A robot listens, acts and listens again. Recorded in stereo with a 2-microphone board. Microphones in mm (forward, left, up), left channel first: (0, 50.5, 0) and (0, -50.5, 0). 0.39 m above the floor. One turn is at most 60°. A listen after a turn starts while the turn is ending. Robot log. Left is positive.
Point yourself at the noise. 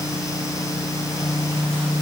cmd idle
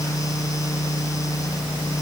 cmd idle
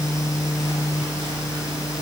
end: I can't make out anything.